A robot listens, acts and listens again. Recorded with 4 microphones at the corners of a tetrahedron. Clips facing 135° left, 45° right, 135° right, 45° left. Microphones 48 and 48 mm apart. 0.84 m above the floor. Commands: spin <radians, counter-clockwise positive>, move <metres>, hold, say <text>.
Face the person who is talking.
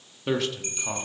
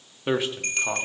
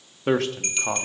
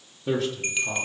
spin -2.09
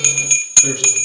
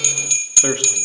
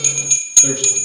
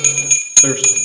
say Facing the man speaking, 1 to 2 m away.